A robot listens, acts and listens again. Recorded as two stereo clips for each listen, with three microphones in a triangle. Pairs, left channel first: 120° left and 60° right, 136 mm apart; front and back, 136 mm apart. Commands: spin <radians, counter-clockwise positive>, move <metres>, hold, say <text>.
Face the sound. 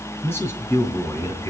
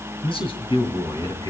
spin 0.96
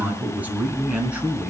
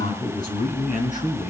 spin 0.44
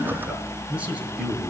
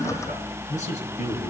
spin 0.44
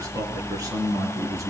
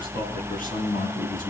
say Found it: a man speaking, straight ahead.